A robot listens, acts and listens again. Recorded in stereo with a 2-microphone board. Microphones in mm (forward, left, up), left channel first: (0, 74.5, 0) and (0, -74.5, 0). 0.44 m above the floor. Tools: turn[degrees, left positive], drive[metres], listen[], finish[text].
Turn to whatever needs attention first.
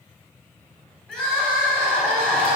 Action: turn[30]
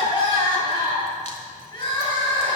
Thought: So it is at 145° left.
Action: turn[145]
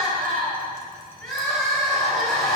Action: finish[Facing the crying.]